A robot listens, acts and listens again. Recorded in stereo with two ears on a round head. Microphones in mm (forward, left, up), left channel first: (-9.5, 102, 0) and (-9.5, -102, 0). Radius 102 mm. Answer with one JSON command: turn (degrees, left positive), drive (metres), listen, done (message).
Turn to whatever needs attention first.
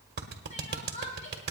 {"turn": 35}
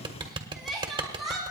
{"done": "Found it: crying, straight ahead, 2 to 4 m away."}